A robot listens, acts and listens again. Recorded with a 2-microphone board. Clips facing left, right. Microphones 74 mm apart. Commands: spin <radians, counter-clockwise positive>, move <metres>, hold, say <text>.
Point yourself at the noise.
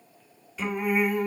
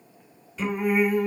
spin -0.52
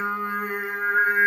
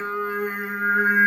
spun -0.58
spin -0.52
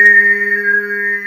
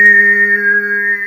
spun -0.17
spin -0.61
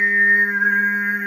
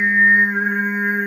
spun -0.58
spin -0.61
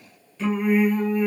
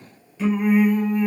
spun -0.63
spin -0.17
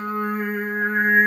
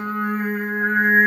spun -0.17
say Facing the singing, 2 to 4 m away.